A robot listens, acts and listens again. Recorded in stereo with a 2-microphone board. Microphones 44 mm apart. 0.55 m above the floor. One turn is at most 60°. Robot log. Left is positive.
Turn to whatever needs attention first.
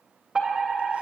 cmd yaw -30
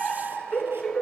note: So it is at 20° left.
cmd yaw +20
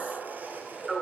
end: Found it: a fire alarm, straight ahead, 2 to 4 m away.